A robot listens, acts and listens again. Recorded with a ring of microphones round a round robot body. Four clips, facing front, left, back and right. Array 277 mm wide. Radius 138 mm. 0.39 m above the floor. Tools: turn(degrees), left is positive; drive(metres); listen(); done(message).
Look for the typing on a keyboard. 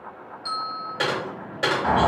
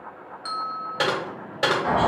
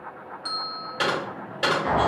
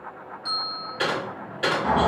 turn(degrees=85)
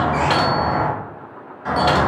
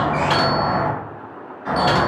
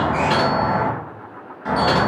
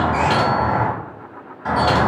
listen()
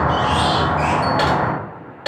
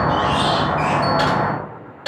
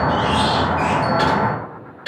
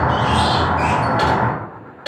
done("Found it: typing on a keyboard, straight ahead, 1 to 2 m away.")